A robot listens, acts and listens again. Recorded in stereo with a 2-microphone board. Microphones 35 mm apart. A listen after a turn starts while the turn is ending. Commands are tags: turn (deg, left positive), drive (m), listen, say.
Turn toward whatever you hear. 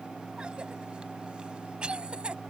<turn deg="-30"/>
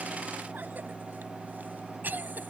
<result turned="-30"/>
<turn deg="-120"/>
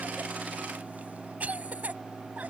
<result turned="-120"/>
<turn deg="-45"/>
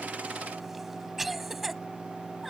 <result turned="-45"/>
<say>Facing the cough.</say>